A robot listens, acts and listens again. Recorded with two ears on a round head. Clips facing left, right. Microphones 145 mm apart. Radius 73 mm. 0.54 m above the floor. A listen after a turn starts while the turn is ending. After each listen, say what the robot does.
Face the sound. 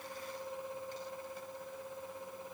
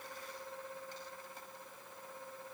Keep listening.
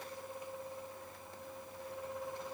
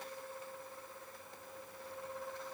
Keep listening.
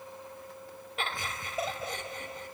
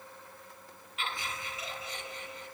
Turn 45° left.
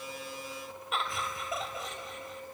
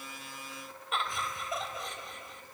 Found it: laughter, straight ahead.